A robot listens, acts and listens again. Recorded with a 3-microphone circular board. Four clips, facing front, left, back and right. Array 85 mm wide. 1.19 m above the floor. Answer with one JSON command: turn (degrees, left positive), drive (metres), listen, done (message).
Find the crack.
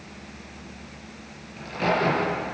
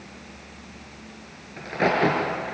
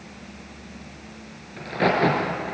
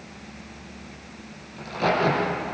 {"turn": 125}
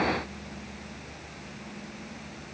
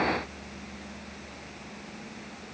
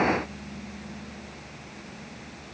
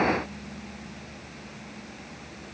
{"done": "Facing where the crack came from. I can't hear it now."}